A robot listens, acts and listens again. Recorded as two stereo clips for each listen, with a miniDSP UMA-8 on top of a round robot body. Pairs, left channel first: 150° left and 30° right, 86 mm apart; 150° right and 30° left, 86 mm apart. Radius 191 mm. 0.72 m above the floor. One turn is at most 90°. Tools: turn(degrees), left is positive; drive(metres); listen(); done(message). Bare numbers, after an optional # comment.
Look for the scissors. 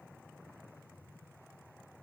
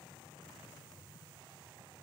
listen()
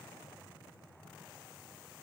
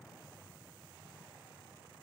listen()
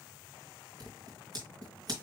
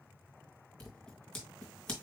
# The scissors: 70° right.
turn(-70)
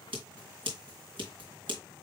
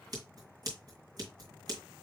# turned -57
# The scissors is now 15° right.
turn(-15)
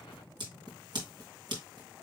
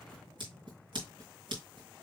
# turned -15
done("Facing the scissors.")